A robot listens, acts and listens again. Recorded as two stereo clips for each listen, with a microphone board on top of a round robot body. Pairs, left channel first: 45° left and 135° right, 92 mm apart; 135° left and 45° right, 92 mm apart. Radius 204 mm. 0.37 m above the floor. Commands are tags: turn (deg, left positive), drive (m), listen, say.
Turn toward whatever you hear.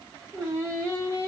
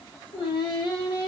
<turn deg="165"/>
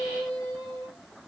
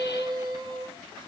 <turn deg="-10"/>
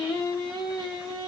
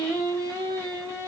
<say>Facing the singing.</say>